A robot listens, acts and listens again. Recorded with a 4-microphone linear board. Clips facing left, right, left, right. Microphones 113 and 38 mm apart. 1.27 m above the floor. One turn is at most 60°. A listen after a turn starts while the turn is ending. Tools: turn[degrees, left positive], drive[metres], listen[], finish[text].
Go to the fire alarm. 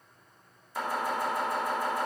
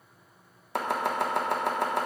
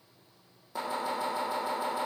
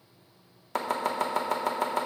Action: listen[]
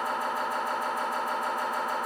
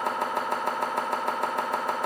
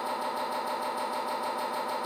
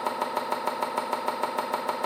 Action: listen[]
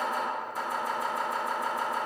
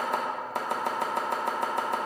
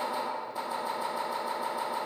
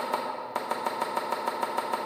Action: finish[I can't make out a fire alarm, only chopping.]